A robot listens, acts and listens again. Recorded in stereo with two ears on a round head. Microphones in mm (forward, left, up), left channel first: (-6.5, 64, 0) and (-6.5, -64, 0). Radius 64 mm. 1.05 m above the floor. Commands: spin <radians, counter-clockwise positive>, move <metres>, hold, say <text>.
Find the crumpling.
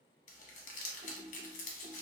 spin 1.05
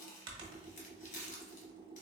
spin 1.05
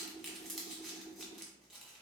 say Facing the crumpling, 1 to 2 m away.